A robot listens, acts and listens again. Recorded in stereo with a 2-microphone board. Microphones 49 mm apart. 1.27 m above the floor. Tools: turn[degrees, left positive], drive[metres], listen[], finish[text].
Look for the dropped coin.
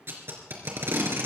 Action: listen[]
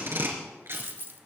Thought: The dropped coin: about 45° right or 135° right.
Action: turn[-45]
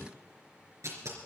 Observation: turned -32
Action: listen[]
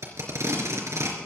Action: finish[I heard a dropped coin, but can't make it out now. It was about 15° right or 105° right.]